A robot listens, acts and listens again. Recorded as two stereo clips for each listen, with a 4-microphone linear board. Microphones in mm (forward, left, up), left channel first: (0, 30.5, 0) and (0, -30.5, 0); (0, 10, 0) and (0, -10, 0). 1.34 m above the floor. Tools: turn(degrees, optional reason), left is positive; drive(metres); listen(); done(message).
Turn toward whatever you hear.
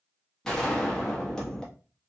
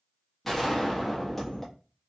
turn(degrees=30)
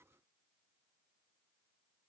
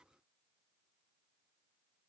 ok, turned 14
listen()
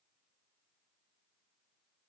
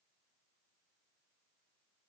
done("I heard a gunshot, but can't make it out now. It was about 5° right or 155° left.")